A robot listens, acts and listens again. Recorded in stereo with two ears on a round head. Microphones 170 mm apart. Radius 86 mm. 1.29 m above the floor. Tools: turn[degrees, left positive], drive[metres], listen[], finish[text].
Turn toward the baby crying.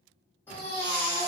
Action: turn[30]
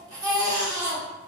Thought: So it is at 20° right.
Action: turn[-20]
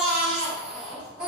Action: finish[Found it: a baby crying, straight ahead, under 1 m away.]